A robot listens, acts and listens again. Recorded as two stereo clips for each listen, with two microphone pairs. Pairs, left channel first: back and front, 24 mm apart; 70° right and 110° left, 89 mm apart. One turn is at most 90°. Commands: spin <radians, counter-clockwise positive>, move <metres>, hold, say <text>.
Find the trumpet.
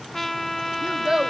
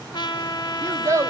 spin -1.57
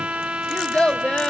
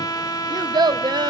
spin -0.35
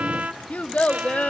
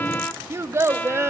say Found it: a trumpet, straight ahead.